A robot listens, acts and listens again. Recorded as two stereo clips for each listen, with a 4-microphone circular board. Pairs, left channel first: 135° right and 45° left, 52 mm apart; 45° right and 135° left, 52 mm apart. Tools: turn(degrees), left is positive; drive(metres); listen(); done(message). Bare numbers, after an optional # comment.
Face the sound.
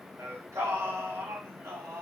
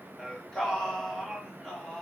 # The singing: 45° left.
turn(45)
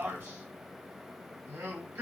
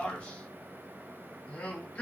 # The singing is now 20° left.
turn(20)
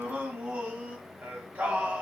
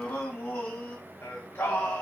done("Found it: singing, straight ahead.")